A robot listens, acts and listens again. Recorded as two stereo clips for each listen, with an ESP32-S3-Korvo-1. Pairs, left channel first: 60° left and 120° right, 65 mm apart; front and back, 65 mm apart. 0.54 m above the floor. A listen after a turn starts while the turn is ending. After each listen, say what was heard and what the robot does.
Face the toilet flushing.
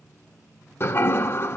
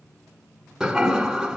The toilet flushing: 100° left. Turn 100° left.
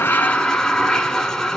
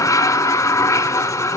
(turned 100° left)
The toilet flushing is now 20° right. Turn 20° right.
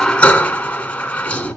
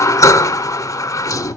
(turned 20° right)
Found it: a toilet flushing, straight ahead, under 1 m away.